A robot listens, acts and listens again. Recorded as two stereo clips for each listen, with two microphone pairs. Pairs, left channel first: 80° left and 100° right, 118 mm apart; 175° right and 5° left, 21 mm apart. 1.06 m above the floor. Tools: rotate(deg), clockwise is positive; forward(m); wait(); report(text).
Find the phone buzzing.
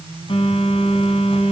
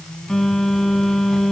rotate(-120)
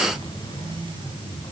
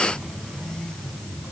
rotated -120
rotate(-30)
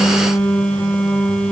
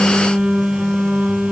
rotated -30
report("Facing the phone buzzing.")